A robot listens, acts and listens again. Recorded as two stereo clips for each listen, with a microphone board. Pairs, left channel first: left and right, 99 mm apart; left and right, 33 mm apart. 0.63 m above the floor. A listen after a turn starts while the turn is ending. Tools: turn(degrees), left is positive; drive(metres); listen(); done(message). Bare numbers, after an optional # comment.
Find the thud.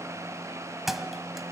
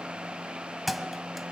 turn(-30)
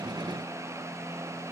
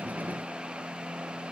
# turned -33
listen()
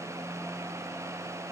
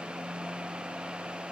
done("I heard a thud, but can't make it out now. It was about 30° left or 145° right.")